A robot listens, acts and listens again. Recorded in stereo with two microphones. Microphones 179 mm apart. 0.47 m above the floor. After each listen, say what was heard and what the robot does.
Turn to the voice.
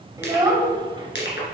The child speaking: about 25° right or 155° right. Turn 25° right.
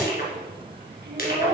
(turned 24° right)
So it is at 110° right. Turn 110° right.
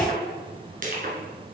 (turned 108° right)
Keep listening.
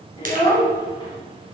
The child speaking is now 25° left. Turn 25° left.
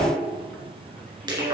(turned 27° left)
Keep listening.
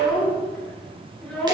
Facing the child speaking, 2 to 4 m away.